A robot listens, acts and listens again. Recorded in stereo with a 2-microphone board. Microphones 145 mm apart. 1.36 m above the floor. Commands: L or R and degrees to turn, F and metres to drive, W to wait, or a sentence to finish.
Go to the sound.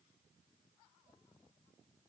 W
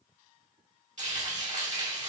R55
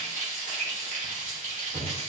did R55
R65
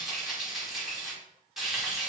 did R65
F1.0
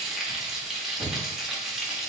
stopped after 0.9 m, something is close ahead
I am next to the frying.